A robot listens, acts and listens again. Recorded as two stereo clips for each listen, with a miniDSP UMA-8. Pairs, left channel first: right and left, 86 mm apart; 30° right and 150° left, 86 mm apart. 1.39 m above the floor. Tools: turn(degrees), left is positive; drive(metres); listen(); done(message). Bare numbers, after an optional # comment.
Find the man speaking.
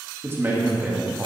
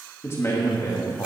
# The man speaking: 15° left.
turn(15)
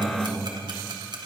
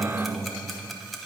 done("Facing the man speaking, 2 to 4 m away.")